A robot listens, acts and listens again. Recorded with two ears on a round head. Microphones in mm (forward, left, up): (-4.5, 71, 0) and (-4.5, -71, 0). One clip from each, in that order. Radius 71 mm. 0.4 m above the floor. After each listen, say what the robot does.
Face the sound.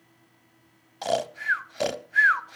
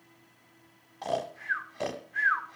Turn 90° left.
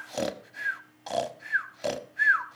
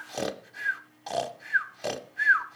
Facing the snoring.